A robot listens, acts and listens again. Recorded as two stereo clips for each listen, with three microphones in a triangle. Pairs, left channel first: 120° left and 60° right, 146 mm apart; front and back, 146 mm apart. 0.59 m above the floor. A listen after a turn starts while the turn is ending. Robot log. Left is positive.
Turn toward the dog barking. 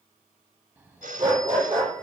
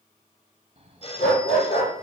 end: Facing the dog barking.